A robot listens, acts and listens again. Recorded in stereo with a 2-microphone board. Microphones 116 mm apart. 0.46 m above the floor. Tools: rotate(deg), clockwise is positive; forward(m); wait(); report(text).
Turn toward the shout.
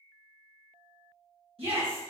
rotate(55)
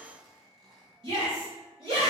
rotate(60)
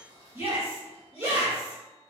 rotate(25)
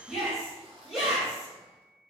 report("Found it: a shout, straight ahead.")